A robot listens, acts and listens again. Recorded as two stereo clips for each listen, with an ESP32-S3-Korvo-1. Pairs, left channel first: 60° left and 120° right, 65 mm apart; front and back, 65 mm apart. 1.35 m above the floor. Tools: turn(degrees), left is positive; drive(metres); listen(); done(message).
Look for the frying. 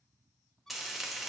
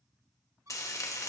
turn(degrees=-35)
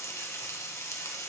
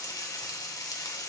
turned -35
turn(degrees=15)
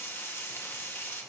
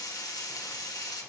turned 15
done("Facing the frying, 1 to 2 m away.")